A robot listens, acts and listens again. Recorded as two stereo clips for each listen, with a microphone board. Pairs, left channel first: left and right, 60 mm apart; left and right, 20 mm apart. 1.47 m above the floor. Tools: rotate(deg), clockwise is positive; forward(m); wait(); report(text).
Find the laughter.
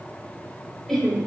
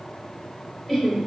rotate(-30)
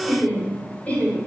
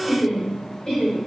rotate(-155)
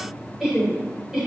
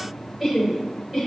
report("Facing the laughter.")